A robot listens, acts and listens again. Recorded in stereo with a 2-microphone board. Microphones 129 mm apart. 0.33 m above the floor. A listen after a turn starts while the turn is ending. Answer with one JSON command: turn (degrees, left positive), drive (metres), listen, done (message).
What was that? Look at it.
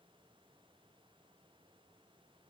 {"listen": true}
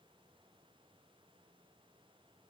{"listen": true}
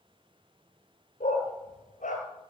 {"turn": 90}
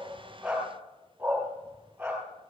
{"turn": -10}
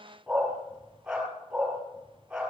{"done": "Facing the dog barking."}